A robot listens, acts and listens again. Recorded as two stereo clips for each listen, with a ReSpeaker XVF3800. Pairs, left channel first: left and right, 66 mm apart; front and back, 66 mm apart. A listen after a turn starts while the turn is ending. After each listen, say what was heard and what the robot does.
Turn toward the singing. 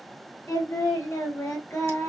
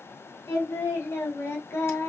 The singing: 45° left. Turn 45° left.
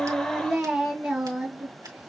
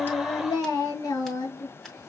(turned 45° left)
The singing is now 10° right. Turn 10° right.
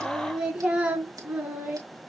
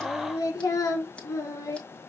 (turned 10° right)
The singing is now 30° right. Turn 30° right.
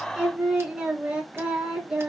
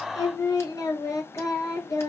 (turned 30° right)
The singing is now 15° right. Turn 15° right.
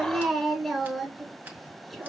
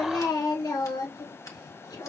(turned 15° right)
Found it: singing, straight ahead.